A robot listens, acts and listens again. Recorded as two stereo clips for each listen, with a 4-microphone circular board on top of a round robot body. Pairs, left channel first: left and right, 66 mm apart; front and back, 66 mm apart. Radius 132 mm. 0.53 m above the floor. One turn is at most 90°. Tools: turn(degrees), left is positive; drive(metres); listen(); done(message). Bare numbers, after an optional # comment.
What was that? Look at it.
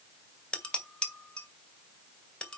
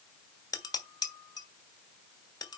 # The dishes clattering: 15° left.
turn(15)
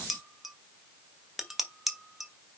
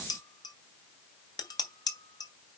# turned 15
done("Facing the dishes clattering.")